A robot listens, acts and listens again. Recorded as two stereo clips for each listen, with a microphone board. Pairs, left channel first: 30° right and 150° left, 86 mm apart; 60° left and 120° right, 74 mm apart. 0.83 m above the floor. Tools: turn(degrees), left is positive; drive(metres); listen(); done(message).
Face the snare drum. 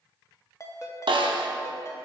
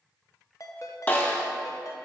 turn(degrees=125)
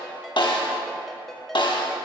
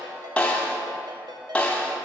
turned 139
turn(degrees=-10)
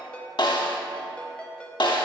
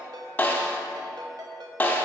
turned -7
done("Facing the snare drum, under 1 m away.")